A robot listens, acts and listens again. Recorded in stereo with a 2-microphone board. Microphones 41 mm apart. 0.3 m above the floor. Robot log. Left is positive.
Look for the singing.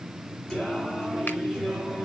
cmd yaw +30
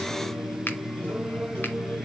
note: So it is at 135° left.
cmd yaw +135
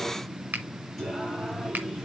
end: Facing the singing, over 4 m away.